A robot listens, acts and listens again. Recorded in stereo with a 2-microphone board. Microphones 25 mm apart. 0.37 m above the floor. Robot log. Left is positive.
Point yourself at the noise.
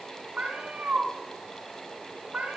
note: The cat meowing: about 65° right or 115° right.
cmd yaw -65
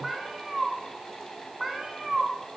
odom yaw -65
end: Facing the cat meowing, 2 to 4 m away.